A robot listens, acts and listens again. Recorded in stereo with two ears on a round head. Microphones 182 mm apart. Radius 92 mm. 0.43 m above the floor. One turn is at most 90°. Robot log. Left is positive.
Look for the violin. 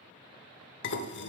cmd idle
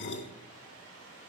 cmd idle
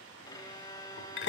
note: The violin: about 20° left or 160° left.
cmd yaw +20
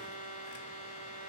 note: So it is at 140° left.
cmd yaw +90
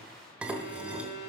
note: The violin is now 55° left.
cmd yaw +55
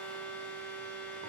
note: The violin is now 10° left.
cmd yaw +10
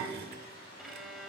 end: Facing the violin, under 1 m away.